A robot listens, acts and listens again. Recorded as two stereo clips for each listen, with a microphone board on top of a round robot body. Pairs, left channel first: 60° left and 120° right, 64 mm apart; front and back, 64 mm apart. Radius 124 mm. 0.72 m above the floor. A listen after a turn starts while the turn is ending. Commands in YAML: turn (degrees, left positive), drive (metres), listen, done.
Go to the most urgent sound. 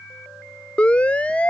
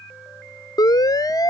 turn: -10
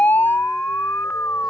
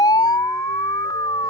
drive: 1.0
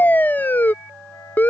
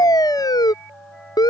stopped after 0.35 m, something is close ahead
done: "Something is in my way. I am facing the siren but have not reached it."